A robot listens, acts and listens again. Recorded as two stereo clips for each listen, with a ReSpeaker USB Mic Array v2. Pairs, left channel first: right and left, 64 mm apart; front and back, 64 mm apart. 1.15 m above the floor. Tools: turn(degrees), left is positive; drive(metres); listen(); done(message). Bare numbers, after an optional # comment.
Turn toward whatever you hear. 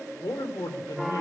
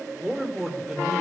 # The man speaking: 90° right.
turn(-90)
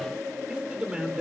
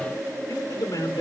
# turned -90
# The man speaking is now 15° left.
turn(15)
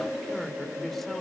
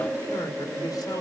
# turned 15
done("Facing the man speaking, 2 to 4 m away.")